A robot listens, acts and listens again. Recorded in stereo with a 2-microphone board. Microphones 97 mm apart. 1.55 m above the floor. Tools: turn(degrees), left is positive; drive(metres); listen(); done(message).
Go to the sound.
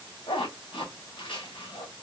turn(degrees=60)
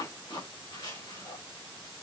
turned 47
turn(degrees=70)
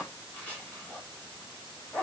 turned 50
turn(degrees=20)
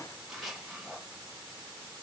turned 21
drive(metres=1.0)
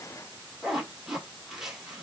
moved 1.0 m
drive(metres=1.0)
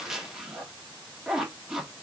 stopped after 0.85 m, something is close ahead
turn(degrees=-10)
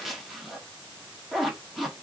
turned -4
done("I am next to the zipper.")